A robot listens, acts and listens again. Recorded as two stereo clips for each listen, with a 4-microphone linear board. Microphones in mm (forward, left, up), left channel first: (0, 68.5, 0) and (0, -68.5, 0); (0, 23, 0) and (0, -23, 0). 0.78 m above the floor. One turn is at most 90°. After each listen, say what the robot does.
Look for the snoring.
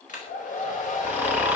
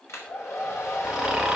Turn 30° right.
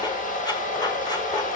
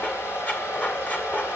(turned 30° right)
Keep listening.
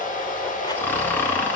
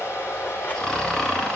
Turn 15° left.
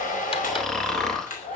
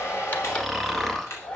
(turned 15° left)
Found it: snoring, straight ahead.